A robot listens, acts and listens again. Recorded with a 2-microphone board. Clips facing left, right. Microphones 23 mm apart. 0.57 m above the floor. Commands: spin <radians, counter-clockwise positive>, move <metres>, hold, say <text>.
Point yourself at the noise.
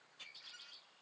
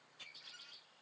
hold
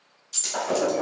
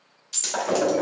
spin -0.44
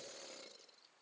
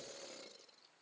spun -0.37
hold
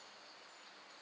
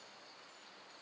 say I heard breaking glass, but can't make it out now. It was about straight ahead or 135° right.